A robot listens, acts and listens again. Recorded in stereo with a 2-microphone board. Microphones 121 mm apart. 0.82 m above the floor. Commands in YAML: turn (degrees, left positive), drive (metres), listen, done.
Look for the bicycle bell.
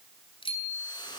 turn: 45
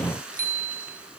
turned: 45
turn: 90
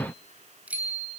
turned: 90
turn: -10
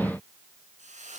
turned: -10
listen: true
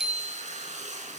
done: "Found it: a bicycle bell, straight ahead."